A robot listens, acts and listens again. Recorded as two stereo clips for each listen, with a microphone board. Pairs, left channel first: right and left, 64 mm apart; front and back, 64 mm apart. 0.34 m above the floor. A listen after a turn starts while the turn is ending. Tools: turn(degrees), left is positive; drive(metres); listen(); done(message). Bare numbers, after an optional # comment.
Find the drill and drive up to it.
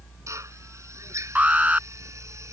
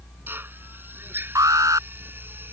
# The drill: 125° left.
turn(125)
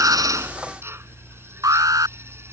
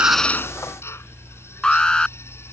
# The drill is now 45° left.
turn(45)
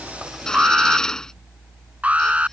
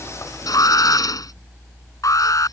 # The drill is now 10° right.
turn(-10)
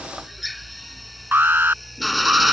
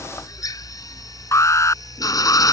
drive(1.0)
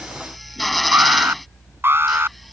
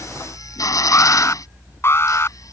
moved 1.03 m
drive(1.0)
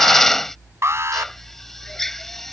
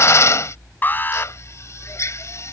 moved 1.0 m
drive(1.0)
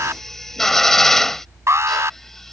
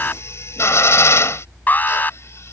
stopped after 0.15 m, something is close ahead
done("Arrived at the drill, straight ahead.")